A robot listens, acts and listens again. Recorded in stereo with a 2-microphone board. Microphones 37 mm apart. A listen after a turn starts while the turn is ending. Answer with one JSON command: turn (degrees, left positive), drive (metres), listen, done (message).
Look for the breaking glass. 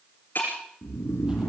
{"turn": 60}
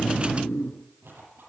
{"listen": true}
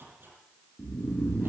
{"done": "I heard breaking glass, but can't make it out now. It was about straight ahead or 60° left."}